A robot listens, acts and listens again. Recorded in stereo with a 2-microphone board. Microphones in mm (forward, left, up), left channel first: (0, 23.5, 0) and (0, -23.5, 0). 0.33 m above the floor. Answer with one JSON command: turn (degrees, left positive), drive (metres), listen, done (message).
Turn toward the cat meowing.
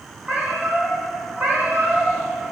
{"turn": -40}
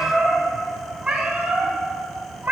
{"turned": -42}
{"turn": -50}
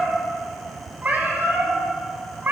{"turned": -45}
{"turn": -45}
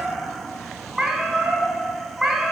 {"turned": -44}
{"done": "Found it: a cat meowing, straight ahead."}